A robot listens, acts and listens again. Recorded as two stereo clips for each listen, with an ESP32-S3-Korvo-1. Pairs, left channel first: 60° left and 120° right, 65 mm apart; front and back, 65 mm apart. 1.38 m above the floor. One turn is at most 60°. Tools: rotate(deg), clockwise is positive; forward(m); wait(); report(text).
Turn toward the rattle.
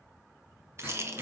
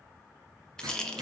rotate(60)
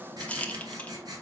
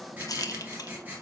rotate(10)
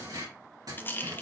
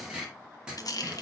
report("Facing the rattle.")